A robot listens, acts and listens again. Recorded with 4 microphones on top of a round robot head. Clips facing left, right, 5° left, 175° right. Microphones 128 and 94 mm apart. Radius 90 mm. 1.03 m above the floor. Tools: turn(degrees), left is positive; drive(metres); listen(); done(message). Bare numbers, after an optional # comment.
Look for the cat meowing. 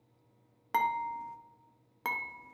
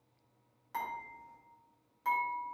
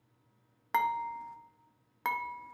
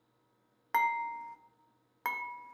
listen()
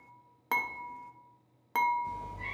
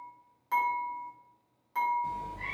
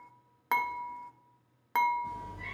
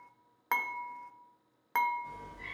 # The cat meowing: 60° right.
turn(-60)
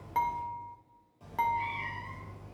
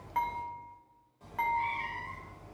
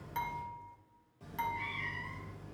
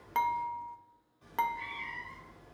# The cat meowing is now 15° left.
turn(15)
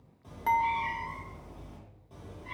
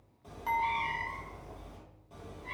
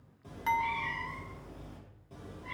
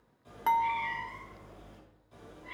done("Found it: a cat meowing, straight ahead, 2 to 4 m away.")